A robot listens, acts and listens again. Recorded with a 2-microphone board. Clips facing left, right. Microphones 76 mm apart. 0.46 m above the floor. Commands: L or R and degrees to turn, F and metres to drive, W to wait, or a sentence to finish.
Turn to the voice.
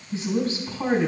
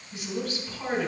L30
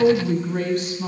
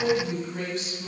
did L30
L120
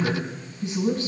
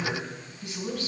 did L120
L35
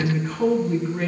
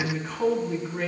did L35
Found it: a woman speaking, straight ahead.